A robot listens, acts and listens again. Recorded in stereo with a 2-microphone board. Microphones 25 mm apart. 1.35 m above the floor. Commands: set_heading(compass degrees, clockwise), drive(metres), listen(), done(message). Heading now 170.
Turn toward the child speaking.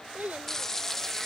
set_heading(240)
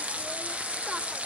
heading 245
listen()
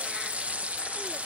listen()
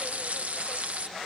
done("I heard a child speaking, but can't make it out now. It was about 5° left or 35° right.")